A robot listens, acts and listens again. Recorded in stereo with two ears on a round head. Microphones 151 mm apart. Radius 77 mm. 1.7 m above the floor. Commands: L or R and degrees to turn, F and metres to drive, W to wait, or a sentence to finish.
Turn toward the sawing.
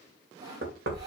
R25
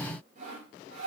R130
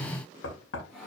Facing the sawing.